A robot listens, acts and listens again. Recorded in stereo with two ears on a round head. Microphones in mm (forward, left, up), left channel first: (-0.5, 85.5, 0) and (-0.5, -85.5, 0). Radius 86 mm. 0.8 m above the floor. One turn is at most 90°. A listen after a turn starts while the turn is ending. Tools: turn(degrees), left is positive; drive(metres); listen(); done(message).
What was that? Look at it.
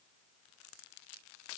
listen()
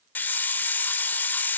turn(degrees=30)
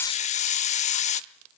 turn(degrees=90)
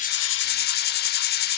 turn(degrees=60)
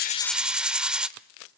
done("Facing the hiss.")